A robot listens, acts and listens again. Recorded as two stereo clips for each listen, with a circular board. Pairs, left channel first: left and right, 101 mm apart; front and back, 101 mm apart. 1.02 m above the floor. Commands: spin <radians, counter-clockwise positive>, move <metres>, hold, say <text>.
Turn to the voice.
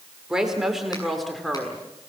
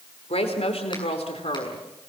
say Found it: a woman speaking, straight ahead, 2 to 4 m away.